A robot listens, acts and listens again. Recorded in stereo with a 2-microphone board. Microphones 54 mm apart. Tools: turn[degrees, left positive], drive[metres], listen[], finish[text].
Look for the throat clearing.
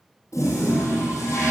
Action: listen[]
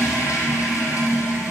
Action: listen[]
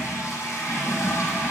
Action: finish[I can't make out throat clearing, only a toilet flushing.]